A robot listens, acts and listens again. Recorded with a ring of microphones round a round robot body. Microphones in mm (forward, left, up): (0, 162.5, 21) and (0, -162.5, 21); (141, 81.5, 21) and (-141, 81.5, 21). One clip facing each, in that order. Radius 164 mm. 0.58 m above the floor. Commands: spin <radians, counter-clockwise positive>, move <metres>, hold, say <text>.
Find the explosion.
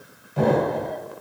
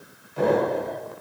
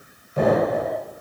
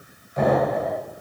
spin 0.96
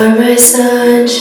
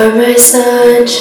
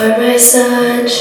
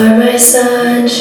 say Facing where the explosion came from. I can't hear it now.